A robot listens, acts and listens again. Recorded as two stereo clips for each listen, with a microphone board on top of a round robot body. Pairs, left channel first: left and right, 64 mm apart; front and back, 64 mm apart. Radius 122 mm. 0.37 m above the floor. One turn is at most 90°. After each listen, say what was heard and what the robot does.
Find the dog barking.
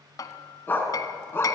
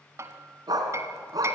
The dog barking: 145° left. Turn 90° left.
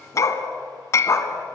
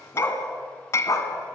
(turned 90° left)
The dog barking is now 45° left. Turn 45° left.
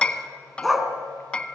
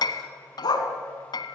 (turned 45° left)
Facing the dog barking.